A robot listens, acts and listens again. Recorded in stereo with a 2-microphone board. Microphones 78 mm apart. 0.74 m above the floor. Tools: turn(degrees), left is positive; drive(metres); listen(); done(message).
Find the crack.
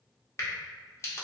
turn(degrees=40)
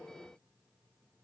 listen()
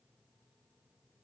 done("I heard a crack, but can't make it out now. It was about straight ahead or 100° left.")